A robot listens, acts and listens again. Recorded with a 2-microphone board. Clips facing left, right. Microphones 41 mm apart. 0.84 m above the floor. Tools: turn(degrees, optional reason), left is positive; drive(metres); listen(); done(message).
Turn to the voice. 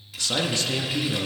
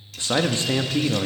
turn(degrees=-30, reason="The man speaking: about 30° right or 150° right.")
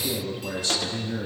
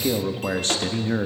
turn(degrees=-115, reason="So it is at 115° right.")
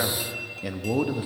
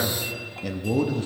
turn(degrees=10, reason="The man speaking is now 10° left.")
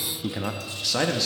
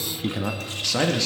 done("Facing the man speaking, 1 to 2 m away.")